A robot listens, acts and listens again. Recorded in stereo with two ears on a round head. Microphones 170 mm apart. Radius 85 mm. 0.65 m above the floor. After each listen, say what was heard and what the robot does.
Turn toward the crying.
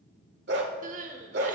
The crying: about 45° right or 135° right. Turn 45° right.
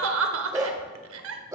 So it is at 90° right. Turn 90° right.
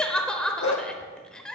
Found it: crying, straight ahead, under 1 m away.